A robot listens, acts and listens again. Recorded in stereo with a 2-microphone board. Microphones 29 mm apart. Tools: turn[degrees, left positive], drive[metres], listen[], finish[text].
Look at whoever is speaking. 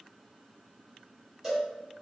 Action: listen[]
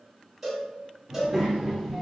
Action: turn[-30]
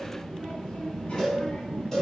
Thought: So it is at 45° left.
Action: turn[45]
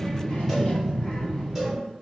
Thought: The child speaking is now 35° left.
Action: turn[35]
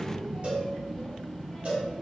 Action: finish[Facing the child speaking.]